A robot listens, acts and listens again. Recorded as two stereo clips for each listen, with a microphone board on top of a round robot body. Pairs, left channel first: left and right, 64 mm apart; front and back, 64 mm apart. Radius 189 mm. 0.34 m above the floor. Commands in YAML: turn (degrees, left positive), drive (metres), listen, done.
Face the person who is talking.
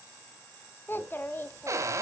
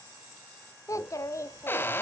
turn: 35
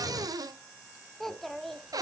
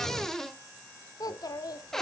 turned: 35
done: "Found it: a child speaking, straight ahead, 1 to 2 m away."